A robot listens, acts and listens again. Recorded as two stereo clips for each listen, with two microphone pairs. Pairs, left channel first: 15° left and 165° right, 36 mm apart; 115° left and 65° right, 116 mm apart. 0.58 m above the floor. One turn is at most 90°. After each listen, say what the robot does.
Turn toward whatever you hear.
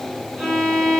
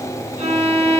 Turn 70° right.
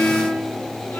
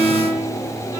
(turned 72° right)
Facing the violin, 2 to 4 m away.